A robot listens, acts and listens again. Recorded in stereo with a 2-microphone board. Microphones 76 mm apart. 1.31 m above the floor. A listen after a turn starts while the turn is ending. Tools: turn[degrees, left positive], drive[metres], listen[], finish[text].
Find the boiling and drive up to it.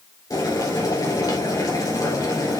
Thought: The boiling: about 55° left or 125° left.
Action: turn[55]
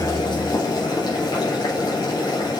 Thought: So it is at 70° left.
Action: turn[70]
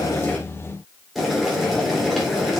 Action: drive[1.0]
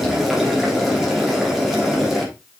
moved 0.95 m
Action: drive[1.0]
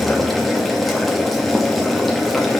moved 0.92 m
Action: drive[1.0]
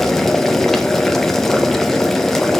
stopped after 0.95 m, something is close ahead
Action: finish[I am next to the boiling.]